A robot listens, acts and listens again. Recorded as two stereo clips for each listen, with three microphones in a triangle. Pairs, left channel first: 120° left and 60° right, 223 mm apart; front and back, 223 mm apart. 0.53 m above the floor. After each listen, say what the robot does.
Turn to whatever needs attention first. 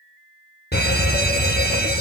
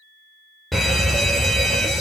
Turn 90° left.
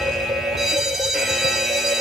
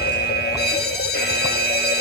Turn 30° left.
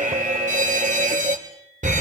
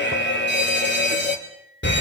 Turn 10° right.
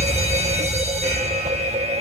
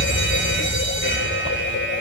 Facing the fire alarm.